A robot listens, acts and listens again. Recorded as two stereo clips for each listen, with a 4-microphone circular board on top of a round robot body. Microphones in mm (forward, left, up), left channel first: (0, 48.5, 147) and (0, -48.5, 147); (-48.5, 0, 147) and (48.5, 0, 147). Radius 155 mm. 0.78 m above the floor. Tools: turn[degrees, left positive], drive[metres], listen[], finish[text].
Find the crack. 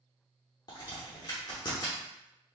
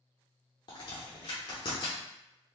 Thought: The crack: 140° left.
Action: turn[140]
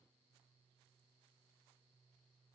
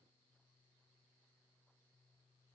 Action: finish[Facing where the crack came from. I can't hear it now.]